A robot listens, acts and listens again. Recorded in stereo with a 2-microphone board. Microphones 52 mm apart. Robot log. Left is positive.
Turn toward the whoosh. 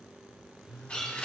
cmd idle
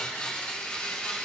cmd idle
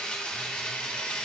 end: I can't make out a whoosh to turn to.